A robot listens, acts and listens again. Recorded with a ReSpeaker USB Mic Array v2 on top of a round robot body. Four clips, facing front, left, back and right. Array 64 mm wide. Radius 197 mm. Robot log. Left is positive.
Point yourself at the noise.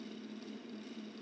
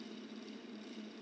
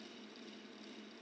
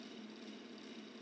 cmd idle
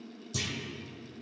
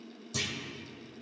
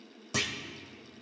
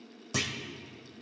note: The clunk: 140° right.
cmd yaw -140
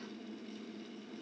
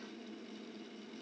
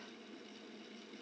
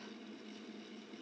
end: I heard a clunk from this way, but can't make it out now.